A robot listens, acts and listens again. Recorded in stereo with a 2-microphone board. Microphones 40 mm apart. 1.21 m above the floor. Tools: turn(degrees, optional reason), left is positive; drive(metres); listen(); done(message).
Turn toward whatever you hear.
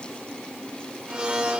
turn(degrees=-25, reason="The blender: about 25° right or 155° right.")
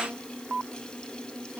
listen()
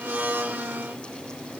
turn(degrees=-125, reason="So it is at 125° right.")
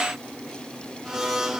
turn(degrees=-10, reason="The blender is now 10° right.")
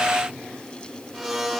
done("Facing the blender.")